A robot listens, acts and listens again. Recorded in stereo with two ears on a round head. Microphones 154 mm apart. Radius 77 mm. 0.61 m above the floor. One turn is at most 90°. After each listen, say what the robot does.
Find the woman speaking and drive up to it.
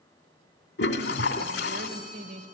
Turn 60° right.
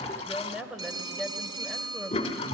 Drive 1.0 m forward.
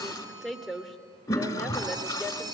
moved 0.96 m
Drive 1.0 m forward.
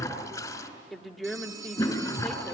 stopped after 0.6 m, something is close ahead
Arrived at the woman speaking, straight ahead.